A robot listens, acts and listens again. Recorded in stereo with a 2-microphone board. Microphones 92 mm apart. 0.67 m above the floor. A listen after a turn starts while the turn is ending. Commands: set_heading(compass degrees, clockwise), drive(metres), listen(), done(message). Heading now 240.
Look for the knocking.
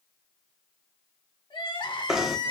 set_heading(270)
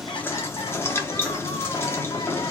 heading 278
set_heading(248)
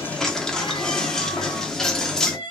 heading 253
done("Found it: knocking, straight ahead.")